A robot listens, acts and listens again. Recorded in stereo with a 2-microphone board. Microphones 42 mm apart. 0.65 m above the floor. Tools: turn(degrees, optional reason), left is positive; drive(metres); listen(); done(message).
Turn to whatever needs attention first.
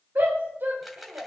turn(degrees=-65, reason="The shout: about 65° right or 115° right.")
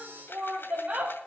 turn(degrees=-35, reason="So it is at 35° right.")
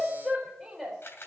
done("Found it: a shout, straight ahead, 2 to 4 m away.")